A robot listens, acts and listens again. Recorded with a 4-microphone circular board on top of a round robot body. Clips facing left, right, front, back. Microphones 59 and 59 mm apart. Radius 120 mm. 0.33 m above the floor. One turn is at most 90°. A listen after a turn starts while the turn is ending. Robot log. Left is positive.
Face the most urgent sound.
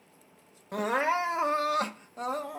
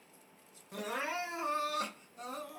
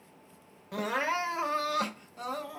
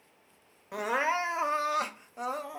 note: The crying: 115° left.
cmd yaw +90
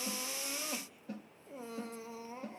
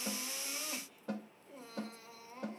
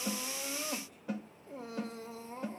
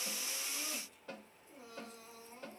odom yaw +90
note: The crying is now 25° left.
cmd yaw +25
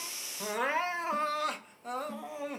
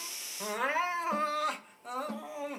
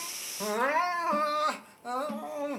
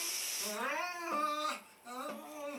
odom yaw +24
end: Facing the crying, under 1 m away.